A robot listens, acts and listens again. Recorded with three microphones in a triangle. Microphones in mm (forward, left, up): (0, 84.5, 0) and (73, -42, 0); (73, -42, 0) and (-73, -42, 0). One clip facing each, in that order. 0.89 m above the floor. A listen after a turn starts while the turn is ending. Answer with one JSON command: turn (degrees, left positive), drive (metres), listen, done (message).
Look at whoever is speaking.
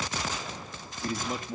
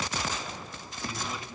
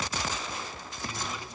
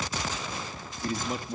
{"turn": 150}
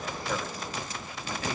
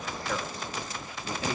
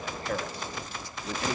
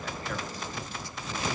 {"listen": true}
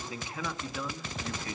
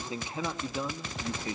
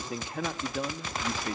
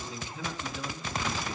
{"done": "Facing the man speaking, 1 to 2 m away."}